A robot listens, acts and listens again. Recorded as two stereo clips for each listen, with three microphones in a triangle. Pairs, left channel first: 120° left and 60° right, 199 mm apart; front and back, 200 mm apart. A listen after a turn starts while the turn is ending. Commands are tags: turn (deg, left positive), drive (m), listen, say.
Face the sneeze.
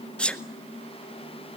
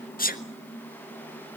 <turn deg="35"/>
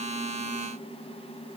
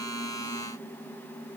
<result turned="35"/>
<say>Facing where the sneeze came from. I can't hear it now.</say>